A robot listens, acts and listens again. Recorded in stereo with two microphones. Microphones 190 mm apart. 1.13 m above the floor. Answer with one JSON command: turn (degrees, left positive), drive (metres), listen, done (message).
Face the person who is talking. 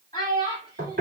{"turn": 25}
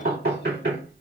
{"listen": true}
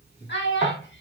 {"turn": 105}
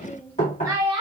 {"turn": -25}
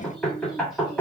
{"listen": true}
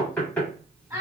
{"turn": -15}
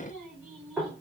{"listen": true}
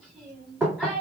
{"done": "Facing the child speaking."}